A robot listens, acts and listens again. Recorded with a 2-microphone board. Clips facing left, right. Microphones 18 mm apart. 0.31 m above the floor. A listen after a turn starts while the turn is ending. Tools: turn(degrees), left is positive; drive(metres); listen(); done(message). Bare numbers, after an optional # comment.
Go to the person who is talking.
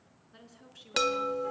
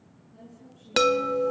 # The woman speaking: about 50° left or 130° left.
turn(50)
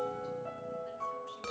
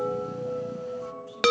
listen()
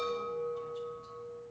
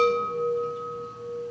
listen()
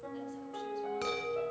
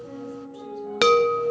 done("I heard a woman speaking, but can't make it out now. It was about straight ahead or 80° left. I did not reach it.")